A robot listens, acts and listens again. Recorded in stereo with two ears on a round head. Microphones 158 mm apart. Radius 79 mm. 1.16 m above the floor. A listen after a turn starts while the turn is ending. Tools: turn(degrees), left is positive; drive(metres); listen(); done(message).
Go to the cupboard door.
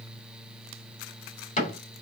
turn(degrees=40)
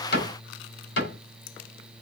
turn(degrees=100)
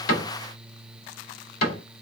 turn(degrees=55)
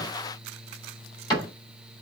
turn(degrees=25)
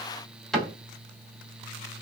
drive(metres=1.0)
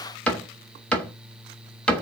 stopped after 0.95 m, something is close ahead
done("I am next to the cupboard door.")